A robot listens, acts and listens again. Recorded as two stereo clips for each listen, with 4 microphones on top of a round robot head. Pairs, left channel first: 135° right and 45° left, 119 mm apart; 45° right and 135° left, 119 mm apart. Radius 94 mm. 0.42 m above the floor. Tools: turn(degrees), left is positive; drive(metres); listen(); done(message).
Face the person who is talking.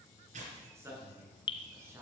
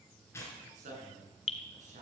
turn(degrees=115)
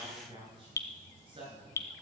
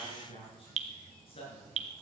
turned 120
done("Found it: a man speaking, straight ahead, over 4 m away.")